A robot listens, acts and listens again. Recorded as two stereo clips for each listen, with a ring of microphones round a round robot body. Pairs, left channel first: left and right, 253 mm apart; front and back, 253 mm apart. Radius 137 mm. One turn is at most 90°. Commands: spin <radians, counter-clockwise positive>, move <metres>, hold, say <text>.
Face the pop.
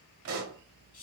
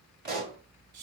spin -1.57
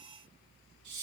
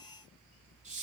spin -0.61
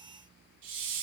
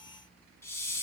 say I heard a pop from this way, but can't make it out now.